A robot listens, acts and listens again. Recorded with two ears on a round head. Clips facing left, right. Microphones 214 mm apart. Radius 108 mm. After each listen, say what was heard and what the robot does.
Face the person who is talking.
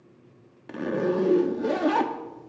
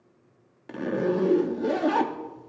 Keep listening.
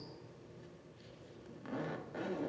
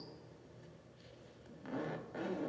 Keep listening.
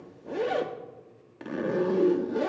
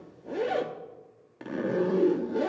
I can't make out anyone speaking, only a zipper.